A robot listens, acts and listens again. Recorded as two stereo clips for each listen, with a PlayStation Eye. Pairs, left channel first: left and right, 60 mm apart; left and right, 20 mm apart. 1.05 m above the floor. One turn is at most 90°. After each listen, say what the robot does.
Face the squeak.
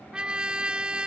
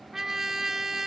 Keep listening.
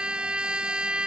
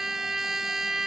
Keep listening.
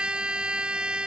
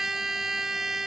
I can't make out a squeak, only a trumpet.